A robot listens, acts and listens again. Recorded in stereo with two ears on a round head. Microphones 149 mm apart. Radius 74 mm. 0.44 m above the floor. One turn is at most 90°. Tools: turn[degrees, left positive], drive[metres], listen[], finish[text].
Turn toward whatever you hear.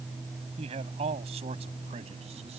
Thought: The man speaking: about 40° right or 140° right.
Action: turn[-40]
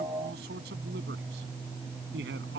Thought: So it is at 105° right.
Action: turn[-90]
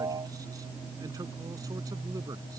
Thought: Nothing new. It was at 15° right.
Action: turn[-15]
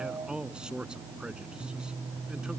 Action: finish[Found it: a man speaking, straight ahead.]